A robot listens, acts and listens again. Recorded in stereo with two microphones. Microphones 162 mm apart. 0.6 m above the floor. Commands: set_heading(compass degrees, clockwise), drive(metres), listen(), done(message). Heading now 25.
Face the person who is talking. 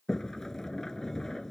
listen()
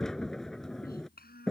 set_heading(310)
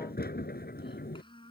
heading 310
set_heading(280)
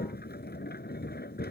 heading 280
listen()
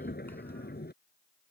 listen()
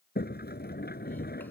done("Facing where the child speaking came from. I can't hear it now.")